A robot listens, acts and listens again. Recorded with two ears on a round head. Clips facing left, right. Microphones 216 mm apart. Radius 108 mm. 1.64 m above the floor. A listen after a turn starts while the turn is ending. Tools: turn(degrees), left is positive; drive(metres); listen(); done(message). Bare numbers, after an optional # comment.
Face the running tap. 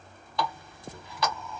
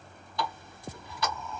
# The running tap: about 50° left or 130° left.
turn(50)
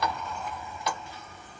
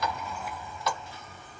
# So it is at 15° left.
turn(15)
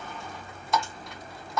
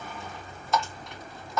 done("Facing the running tap, 1 to 2 m away.")